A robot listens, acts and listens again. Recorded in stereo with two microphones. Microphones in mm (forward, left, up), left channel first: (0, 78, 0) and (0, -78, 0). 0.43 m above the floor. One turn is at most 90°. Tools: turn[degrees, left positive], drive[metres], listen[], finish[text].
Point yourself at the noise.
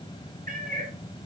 Thought: The cat meowing: about 65° right or 115° right.
Action: turn[-65]
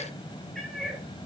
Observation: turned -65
Action: finish[Facing the cat meowing, 2 to 4 m away.]